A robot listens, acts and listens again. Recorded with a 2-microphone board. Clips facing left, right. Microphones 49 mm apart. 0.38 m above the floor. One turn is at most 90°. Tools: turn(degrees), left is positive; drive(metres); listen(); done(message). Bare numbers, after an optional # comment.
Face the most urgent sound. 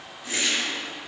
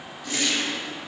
listen()
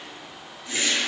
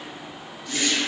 listen()
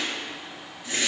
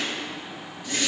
done("I can't make out anything urgent to turn to.")